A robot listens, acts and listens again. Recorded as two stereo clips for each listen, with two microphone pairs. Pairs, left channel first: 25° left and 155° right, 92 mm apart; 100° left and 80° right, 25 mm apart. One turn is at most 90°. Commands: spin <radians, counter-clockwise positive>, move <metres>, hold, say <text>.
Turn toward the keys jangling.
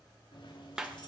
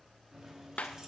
spin -0.17
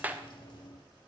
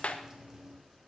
say Facing the keys jangling.